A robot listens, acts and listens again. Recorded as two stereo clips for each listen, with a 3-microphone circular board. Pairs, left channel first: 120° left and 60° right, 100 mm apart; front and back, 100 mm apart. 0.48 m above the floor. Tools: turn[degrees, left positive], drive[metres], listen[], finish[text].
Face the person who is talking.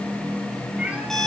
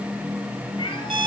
Action: listen[]
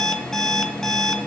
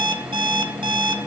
Action: listen[]
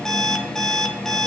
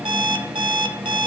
Action: finish[I can't make out anyone speaking, only an alarm clock.]